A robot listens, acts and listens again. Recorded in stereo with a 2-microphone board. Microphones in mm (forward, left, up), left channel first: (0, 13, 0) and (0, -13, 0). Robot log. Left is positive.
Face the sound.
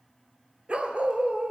note: The dog barking: about 45° right or 135° right.
cmd yaw -45
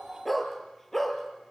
note: So it is at 10° left.
cmd yaw +10
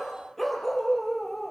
note: The dog barking is now 10° left.
cmd yaw +10
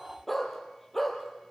note: The dog barking is now 10° left.
cmd yaw +10
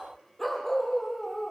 end: Facing the dog barking.